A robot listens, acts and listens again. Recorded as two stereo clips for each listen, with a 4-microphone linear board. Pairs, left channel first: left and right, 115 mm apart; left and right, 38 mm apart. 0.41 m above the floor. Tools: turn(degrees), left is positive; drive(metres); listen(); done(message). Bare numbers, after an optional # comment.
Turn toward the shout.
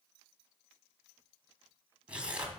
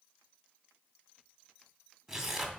listen()
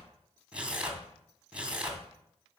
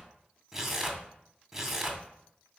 listen()
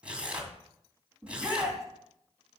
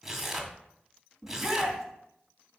turn(-30)
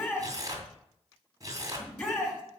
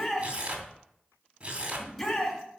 # So it is at 15° left.
turn(15)
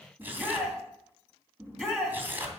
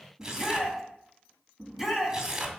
done("Facing the shout, 2 to 4 m away.")